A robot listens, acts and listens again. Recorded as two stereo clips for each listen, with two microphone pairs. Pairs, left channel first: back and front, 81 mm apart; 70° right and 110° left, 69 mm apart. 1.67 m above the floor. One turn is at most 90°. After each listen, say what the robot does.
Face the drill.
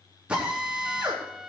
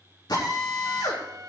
Turn 75° right.
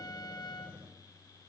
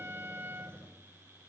Keep listening.
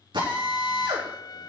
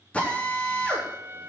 Found it: a drill, straight ahead, over 4 m away.